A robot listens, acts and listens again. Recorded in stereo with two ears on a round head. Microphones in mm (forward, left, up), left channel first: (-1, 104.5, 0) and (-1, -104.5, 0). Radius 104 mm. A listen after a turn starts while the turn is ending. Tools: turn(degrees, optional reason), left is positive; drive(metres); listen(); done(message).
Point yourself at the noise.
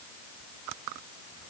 listen()
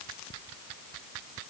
listen()
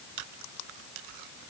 done("I can't make out anything to turn to.")